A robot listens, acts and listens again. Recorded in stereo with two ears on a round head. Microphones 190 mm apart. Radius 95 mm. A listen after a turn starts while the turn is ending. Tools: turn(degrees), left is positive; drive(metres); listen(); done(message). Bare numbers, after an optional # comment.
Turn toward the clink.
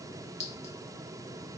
# The clink: about 35° left or 145° left.
turn(35)
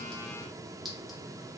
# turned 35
listen()
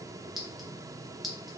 done("Found it: a clink, straight ahead, 1 to 2 m away.")